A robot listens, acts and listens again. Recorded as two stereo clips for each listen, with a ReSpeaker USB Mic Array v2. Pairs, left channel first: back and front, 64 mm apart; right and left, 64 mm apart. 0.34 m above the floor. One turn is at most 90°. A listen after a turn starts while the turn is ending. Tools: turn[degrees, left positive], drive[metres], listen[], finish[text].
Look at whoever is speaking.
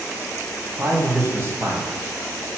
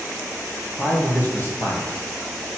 Thought: The man speaking: 45° right.
Action: turn[-45]
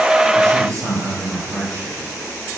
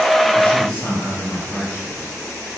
Thought: The man speaking is now 30° right.
Action: turn[-30]
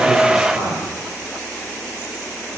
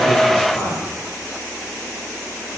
Thought: The man speaking is now 25° right.
Action: turn[-25]
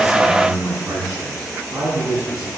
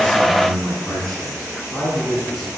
Thought: The man speaking is now 10° right.
Action: turn[-10]
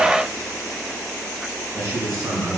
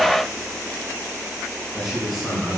Action: finish[Found it: a man speaking, straight ahead, 2 to 4 m away.]